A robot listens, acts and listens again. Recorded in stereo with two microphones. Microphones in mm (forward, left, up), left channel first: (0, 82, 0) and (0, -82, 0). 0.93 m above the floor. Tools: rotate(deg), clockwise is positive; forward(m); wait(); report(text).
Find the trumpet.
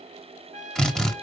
rotate(50)
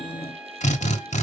report("Found it: a trumpet, straight ahead.")